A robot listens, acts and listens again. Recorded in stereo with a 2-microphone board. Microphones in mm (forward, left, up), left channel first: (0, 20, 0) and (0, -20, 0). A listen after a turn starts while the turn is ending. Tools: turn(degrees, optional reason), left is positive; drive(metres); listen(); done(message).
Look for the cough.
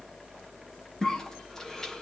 turn(degrees=30)
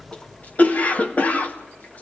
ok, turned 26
turn(degrees=140, reason="So it is at 140° left.")
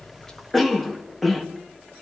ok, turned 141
done("Found it: a cough, straight ahead, 2 to 4 m away.")